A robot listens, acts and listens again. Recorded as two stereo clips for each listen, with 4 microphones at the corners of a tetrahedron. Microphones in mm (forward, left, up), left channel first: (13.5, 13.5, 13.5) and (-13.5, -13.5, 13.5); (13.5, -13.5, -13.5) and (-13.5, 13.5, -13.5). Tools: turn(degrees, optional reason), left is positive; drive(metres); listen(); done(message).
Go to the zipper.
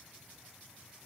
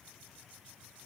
listen()
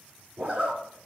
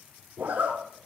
turn(degrees=180, reason="The zipper: straight behind.")
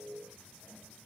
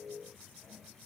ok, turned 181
listen()
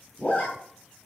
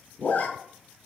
drive(metres=1.0)
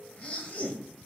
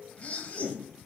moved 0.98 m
drive(metres=1.0)
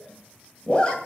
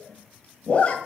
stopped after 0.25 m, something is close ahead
done("Arrived at the zipper, straight ahead.")